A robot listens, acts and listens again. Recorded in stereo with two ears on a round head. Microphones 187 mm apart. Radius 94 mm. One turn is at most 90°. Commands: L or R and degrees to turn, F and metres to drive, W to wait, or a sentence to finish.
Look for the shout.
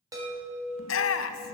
L70
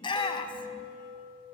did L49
L25
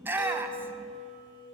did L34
R10
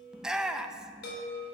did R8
Facing the shout, under 1 m away.